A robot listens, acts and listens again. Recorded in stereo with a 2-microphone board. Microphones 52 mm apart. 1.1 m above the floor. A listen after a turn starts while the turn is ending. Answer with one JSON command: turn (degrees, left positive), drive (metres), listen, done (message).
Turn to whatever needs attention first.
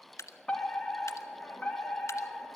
{"turn": 20}
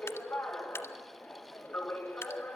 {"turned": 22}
{"turn": 140}
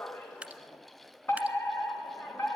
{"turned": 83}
{"turn": 55}
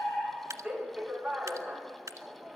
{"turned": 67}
{"turn": -10}
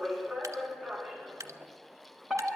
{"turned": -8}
{"done": "Facing the fire alarm."}